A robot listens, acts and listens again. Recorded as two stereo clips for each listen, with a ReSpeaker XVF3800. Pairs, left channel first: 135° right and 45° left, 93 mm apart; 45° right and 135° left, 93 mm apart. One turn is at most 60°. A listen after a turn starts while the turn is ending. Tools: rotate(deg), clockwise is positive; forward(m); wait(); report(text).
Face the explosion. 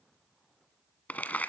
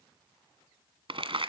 wait()
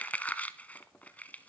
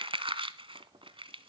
wait()
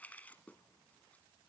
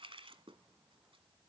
report("I can't make out an explosion, only crumpling.")